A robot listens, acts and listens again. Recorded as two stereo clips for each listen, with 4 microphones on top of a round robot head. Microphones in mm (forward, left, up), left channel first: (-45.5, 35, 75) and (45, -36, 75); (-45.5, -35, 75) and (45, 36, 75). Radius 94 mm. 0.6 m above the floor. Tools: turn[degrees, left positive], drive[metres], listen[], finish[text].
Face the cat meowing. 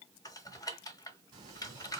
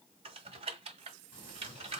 Thought: The cat meowing: 90° right.
Action: turn[-90]
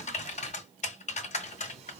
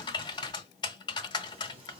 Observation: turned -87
Action: listen[]
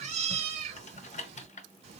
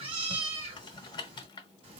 Action: finish[Found it: a cat meowing, straight ahead.]